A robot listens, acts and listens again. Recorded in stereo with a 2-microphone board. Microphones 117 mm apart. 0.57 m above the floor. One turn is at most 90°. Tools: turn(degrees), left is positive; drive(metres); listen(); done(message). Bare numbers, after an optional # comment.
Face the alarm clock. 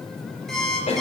turn(30)
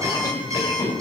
# So it is at 25° right.
turn(-25)
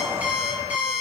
# The alarm clock is now 10° right.
turn(-10)
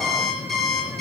done("Found it: an alarm clock, straight ahead, over 4 m away.")